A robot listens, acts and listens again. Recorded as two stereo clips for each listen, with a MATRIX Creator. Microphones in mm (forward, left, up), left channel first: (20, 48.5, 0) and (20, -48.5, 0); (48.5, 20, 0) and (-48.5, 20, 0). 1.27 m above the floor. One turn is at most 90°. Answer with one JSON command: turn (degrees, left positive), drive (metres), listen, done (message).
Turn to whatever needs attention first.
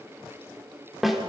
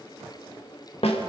{"listen": true}
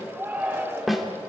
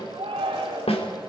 {"turn": -90}
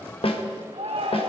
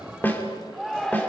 {"turn": -85}
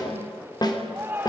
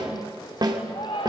{"turn": -25}
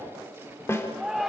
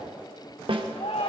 {"done": "Found it: a shout, straight ahead."}